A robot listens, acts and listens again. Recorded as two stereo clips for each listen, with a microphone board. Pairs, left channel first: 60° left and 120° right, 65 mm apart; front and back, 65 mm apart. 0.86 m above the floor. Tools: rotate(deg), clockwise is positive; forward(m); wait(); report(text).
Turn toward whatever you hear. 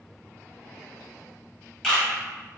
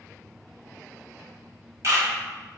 rotate(-140)
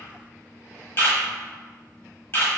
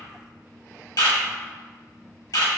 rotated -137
report("Facing the camera shutter.")